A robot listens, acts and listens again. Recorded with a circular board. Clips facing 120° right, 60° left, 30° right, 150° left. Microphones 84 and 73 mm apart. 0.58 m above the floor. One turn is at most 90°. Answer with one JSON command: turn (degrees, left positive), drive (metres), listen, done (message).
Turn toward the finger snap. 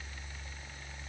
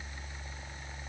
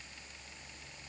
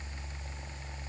{"listen": true}
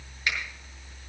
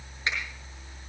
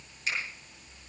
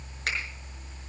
{"turn": 90}
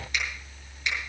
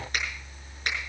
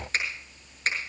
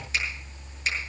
{"turn": 20}
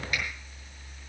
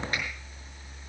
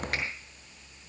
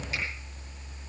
{"listen": true}
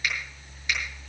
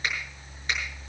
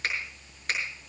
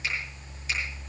{"listen": true}
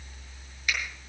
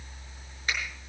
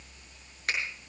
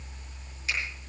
{"done": "Facing the finger snap."}